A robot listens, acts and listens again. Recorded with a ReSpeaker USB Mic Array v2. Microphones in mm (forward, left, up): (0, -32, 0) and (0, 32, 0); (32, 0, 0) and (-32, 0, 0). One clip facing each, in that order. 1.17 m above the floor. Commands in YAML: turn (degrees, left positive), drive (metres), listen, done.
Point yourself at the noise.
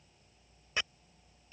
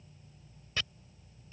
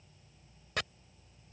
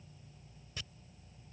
turn: -20
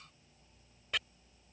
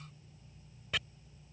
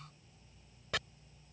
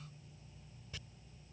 done: "Facing the chopping."